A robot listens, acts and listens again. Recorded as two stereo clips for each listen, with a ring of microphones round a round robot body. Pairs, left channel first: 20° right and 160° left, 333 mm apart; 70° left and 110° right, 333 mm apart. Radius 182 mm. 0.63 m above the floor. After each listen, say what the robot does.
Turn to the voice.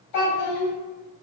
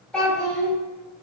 Turn 20° right.
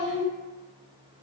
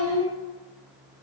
Facing the child speaking.